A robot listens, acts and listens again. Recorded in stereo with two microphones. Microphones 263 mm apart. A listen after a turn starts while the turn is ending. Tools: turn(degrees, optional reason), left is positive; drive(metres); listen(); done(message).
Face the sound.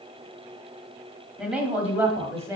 turn(degrees=-30)
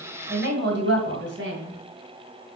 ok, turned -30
turn(degrees=-130, reason="So it is at 130° right.")
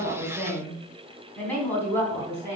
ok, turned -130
done("Facing the woman speaking.")